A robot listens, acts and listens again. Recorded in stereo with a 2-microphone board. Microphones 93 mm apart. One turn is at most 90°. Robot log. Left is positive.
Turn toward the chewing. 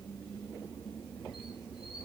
cmd idle
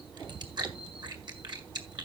note: The chewing: about 50° right or 130° right.
cmd yaw -50
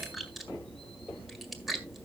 end: Facing the chewing, 1 to 2 m away.